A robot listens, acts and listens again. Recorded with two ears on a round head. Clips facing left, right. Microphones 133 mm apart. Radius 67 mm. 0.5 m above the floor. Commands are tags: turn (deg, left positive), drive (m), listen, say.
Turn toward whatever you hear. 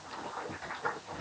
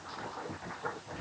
<listen/>
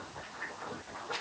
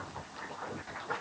<listen/>
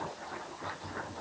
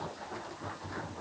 <say>I can't make out anything.</say>